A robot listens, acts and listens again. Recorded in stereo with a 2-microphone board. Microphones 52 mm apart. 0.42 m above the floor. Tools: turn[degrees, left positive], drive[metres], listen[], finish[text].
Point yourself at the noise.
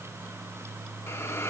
Thought: The hiss: about 55° left or 125° left.
Action: turn[55]
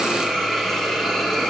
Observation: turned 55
Action: finish[Facing the hiss.]